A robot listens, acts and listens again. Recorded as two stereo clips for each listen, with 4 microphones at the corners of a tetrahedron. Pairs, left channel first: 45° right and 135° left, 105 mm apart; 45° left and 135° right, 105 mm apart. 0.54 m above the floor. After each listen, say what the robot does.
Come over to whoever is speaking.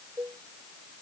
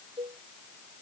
Keep listening.
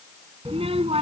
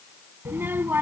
Turn 155° left.
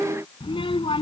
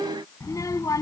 Turn 10° right.
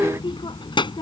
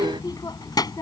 Drive 1.0 m forward.
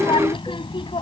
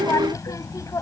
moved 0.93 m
Turn 10° right.
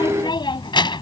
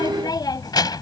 Drive 1.0 m forward.
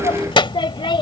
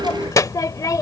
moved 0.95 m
Turn 10° right.
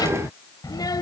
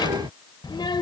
Drive 1.0 m forward.
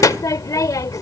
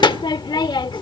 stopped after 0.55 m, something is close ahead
I am next to the child speaking.